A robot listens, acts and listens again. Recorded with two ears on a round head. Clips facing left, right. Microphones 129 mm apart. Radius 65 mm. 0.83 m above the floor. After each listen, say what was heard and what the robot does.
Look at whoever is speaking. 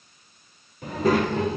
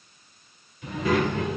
The child speaking: about 25° left or 155° left. Turn 25° left.
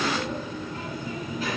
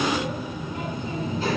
So it is at 30° right. Turn 30° right.
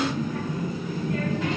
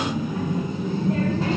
The child speaking is now 30° right. Turn 30° right.
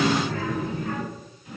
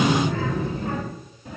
The child speaking is now 30° right. Turn 30° right.
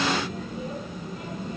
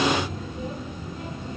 Facing the child speaking, 2 to 4 m away.